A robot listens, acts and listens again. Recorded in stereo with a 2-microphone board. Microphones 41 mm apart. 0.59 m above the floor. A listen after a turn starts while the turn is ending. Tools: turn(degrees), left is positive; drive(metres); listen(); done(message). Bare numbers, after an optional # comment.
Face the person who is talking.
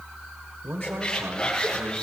# The man speaking: about 70° right or 110° right.
turn(-70)
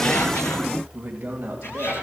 # So it is at 35° right.
turn(-35)
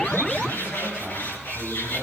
# The man speaking is now 10° right.
turn(-10)
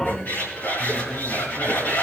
listen()
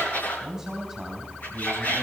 done("Facing the man speaking, 2 to 4 m away.")